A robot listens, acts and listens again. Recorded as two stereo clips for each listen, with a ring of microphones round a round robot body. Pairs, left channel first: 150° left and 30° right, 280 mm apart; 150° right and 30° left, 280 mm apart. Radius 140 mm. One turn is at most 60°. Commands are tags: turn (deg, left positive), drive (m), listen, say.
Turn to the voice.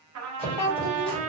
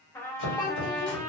<turn deg="60"/>
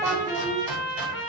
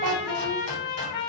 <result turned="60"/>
<turn deg="50"/>
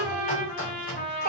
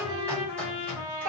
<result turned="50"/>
<listen/>
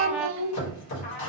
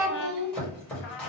<say>Found it: a child speaking, straight ahead, under 1 m away.</say>